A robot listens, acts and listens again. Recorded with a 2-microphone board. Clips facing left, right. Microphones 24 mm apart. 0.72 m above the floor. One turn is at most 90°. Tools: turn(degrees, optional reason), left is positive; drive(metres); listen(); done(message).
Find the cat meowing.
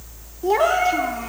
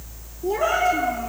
turn(degrees=90)
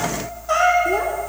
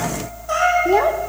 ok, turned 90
done("Found it: a cat meowing, straight ahead, over 4 m away.")